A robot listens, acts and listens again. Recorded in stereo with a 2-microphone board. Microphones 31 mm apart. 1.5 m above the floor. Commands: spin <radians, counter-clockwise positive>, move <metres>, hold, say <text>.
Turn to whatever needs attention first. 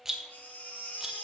spin 1.13
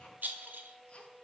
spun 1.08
hold
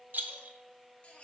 spin 0.79
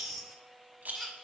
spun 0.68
say Facing the baby crying.